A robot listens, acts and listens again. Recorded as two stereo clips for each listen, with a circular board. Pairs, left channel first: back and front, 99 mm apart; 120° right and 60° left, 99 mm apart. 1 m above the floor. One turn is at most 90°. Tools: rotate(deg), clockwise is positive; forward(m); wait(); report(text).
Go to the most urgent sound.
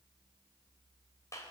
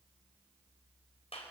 wait()
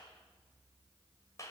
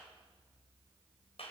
wait()
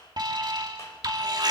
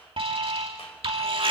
rotate(-40)
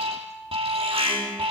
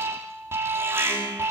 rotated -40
forward(1.0)
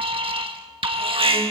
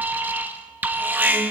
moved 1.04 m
rotate(10)
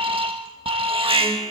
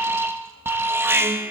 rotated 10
forward(1.0)
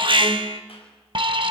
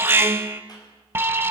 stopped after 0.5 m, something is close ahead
report("I am next to the alarm.")